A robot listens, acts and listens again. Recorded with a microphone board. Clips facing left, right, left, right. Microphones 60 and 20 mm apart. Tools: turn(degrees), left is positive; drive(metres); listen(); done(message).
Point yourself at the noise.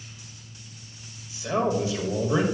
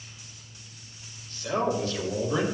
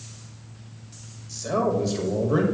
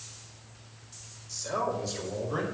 turn(degrees=20)
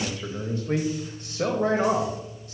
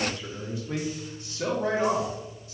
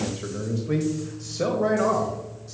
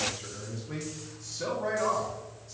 turn(degrees=125)
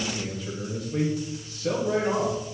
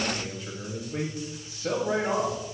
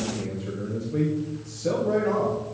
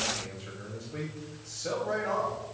turn(degrees=-20)
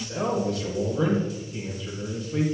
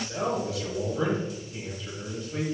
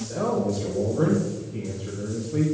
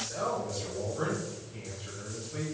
done("Facing the man speaking.")